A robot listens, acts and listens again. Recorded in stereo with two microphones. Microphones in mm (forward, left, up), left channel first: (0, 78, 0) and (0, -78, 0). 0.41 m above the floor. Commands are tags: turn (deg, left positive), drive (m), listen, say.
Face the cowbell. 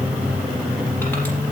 <listen/>
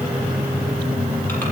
<listen/>
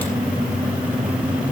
<say>I can't make out a cowbell.</say>